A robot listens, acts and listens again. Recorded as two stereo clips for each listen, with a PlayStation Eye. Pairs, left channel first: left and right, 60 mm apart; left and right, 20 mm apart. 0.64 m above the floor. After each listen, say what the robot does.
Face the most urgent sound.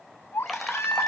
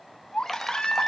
Turn 45° left.
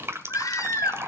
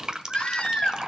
Turn 90° left.
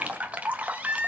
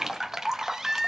Turn 20° right.
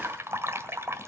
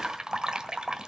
Keep listening.
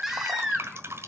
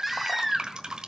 Found it: a baby crying, straight ahead.